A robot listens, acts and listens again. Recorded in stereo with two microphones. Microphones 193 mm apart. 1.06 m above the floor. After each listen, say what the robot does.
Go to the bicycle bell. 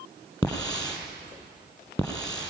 Keep listening.
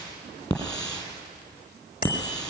Turn 50° left.
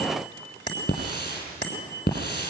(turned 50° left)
Turn 80° left.
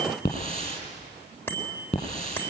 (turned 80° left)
Turn 10° left.
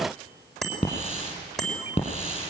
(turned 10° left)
Drive 1.0 m forward.
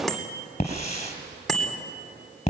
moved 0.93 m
Drive 1.0 m forward.
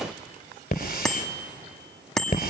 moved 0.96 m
Drive 1.0 m forward.
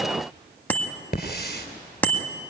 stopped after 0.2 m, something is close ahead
Turn 10° left.
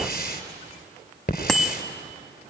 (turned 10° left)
I am next to the bicycle bell.